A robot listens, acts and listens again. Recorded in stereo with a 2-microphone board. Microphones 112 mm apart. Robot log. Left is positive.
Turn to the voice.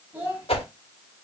note: The child speaking: about 20° right or 160° right.
cmd yaw -20
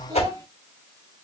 cmd idle
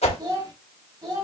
note: So it is at 145° right.
cmd yaw -145
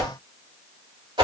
cmd idle
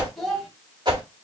end: Found it: a child speaking, straight ahead, 2 to 4 m away.